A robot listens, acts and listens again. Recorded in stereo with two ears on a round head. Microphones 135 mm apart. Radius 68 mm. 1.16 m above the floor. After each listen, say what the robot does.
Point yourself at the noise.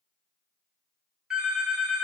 Turn 30° right.
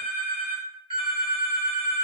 Turn 140° right.
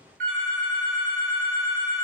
Turn 55° right.
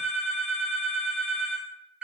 Found it: a phone ringing, straight ahead.